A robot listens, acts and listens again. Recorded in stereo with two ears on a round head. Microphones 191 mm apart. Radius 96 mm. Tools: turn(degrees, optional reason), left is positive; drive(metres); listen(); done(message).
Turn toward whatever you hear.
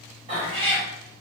turn(degrees=-30, reason="The cat meowing: about 30° right or 150° right.")
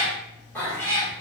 turn(degrees=15, reason="So it is at 15° left.")
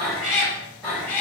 turn(degrees=10, reason="The cat meowing is now 10° left.")
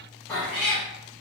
turn(degrees=10, reason="The cat meowing is now 10° left.")
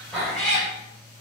done("Found it: a cat meowing, straight ahead.")